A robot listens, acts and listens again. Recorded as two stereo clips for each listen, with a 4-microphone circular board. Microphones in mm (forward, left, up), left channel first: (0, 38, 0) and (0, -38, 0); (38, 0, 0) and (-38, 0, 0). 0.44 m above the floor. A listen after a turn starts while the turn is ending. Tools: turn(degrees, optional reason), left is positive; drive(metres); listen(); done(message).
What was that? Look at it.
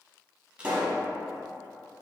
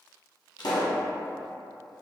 turn(degrees=-15, reason="The pop: 15° right.")
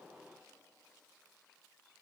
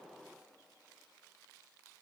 done("I heard a pop from this way, but can't make it out now.")